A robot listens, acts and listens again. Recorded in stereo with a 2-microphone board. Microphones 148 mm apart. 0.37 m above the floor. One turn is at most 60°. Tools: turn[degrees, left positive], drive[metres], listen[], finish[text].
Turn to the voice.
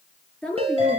Action: turn[30]
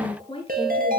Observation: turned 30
Thought: So it is at 140° left.
Action: turn[60]
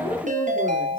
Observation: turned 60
Thought: The woman speaking is now 80° left.
Action: turn[60]
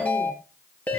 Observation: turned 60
Thought: Nothing new. It was at 20° left.
Action: turn[20]
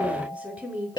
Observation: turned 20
Thought: The woman speaking is now 10° right.
Action: turn[-10]
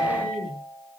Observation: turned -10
Action: finish[Found it: a woman speaking, straight ahead.]